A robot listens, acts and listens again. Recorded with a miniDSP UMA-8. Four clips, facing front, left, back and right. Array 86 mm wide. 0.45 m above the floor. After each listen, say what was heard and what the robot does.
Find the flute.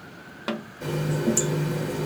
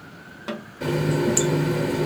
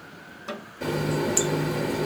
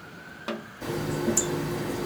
Keep listening.
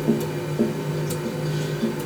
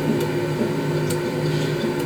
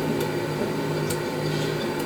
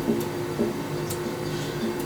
Keep listening.
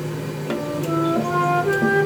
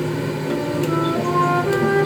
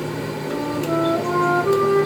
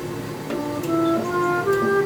The flute: 40° left. Turn 40° left.
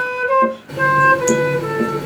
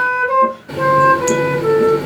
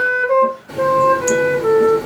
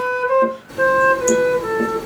The flute is now 10° left. Turn 10° left.
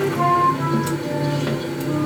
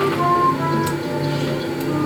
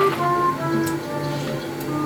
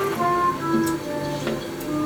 Found it: a flute, straight ahead.